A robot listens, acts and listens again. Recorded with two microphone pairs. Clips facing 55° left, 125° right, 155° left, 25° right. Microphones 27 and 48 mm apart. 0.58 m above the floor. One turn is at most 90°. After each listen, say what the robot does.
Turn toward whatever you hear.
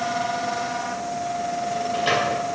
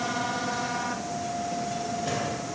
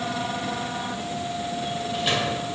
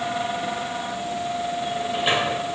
Turn 40° left.
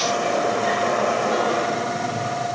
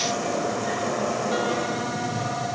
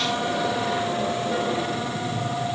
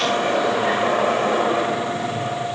Facing the sliding door, 2 to 4 m away.